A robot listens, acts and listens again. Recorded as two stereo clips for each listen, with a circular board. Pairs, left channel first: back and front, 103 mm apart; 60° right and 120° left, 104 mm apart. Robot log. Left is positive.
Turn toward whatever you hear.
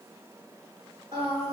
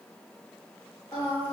note: The singing: 15° right.
cmd yaw -15
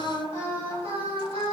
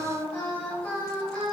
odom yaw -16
note: The singing is now 15° left.
cmd yaw +15
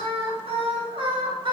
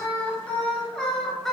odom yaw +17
note: The singing is now 25° left.
cmd yaw +25
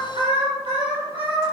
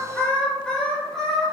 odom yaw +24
note: The singing is now 30° left.
cmd yaw +30
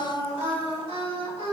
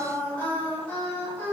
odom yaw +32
note: The singing is now 15° left.
cmd yaw +15
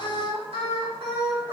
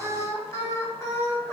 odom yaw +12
end: Facing the singing.